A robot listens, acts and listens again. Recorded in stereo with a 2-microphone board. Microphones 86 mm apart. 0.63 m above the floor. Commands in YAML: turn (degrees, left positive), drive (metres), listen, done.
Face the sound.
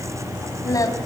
turn: 40
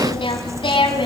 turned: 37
turn: 105
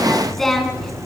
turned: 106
done: "Facing the singing, over 4 m away."